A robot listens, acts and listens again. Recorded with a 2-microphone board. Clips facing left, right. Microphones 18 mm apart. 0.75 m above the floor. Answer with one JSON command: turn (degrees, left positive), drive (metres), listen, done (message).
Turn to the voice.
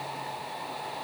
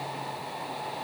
{"listen": true}
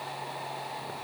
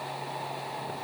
{"listen": true}
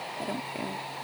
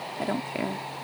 {"turn": -35}
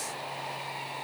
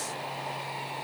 {"listen": true}
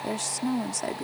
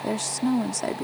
{"turn": -10}
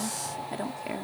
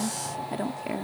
{"done": "Facing the woman speaking."}